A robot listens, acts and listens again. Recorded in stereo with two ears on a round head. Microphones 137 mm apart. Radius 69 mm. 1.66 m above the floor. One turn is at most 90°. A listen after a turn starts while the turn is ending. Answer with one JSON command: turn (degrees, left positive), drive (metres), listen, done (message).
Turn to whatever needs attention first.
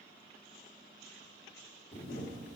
{"listen": true}
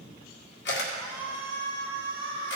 {"turn": 30}
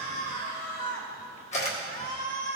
{"turn": 90}
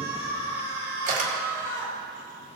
{"turn": 20}
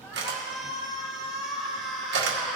{"done": "Found it: a shout, straight ahead, 2 to 4 m away."}